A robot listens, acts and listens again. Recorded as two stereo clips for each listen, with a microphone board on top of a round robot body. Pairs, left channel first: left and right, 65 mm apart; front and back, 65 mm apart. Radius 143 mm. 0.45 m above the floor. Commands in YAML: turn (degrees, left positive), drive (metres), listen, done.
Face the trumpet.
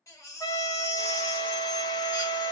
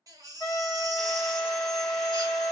turn: 50
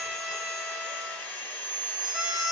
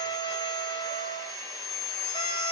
turn: -20
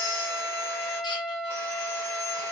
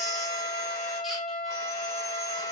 done: "Found it: a trumpet, straight ahead."